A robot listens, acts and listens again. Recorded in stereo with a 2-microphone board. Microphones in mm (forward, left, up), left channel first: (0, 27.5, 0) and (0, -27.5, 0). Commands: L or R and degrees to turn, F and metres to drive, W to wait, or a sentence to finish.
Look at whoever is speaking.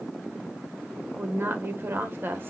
R45
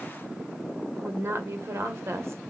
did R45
R80
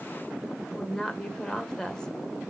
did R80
L15
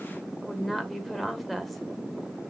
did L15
Found it: a woman speaking, straight ahead, 1 to 2 m away.